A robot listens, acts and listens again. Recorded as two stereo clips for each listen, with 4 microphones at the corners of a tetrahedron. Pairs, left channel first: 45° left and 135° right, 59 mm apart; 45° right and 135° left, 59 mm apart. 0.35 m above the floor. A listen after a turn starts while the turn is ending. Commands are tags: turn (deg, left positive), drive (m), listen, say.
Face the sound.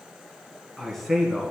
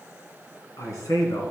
<turn deg="-40"/>
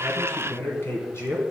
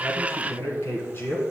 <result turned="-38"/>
<say>Facing the man speaking, 2 to 4 m away.</say>